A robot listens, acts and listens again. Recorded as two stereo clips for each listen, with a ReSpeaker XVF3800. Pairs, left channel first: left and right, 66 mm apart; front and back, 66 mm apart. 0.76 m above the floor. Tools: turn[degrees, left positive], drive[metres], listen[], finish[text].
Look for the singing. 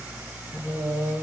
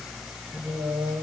Thought: The singing: 145° left.
Action: turn[145]
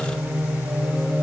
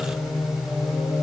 Thought: The singing is now 10° left.
Action: turn[10]
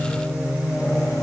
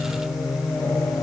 Thought: The singing is now 10° left.
Action: turn[10]
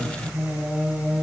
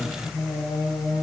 Action: finish[Found it: singing, straight ahead.]